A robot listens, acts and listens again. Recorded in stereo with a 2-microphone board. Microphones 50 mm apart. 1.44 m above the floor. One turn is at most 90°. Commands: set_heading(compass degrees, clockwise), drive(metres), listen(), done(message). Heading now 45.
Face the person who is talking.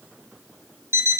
listen()
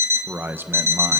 set_heading(90)
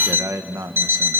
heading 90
set_heading(180)
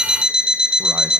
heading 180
listen()
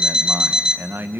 set_heading(225)
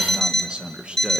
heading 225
set_heading(245)
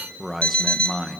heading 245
done("Facing the man speaking, 1 to 2 m away.")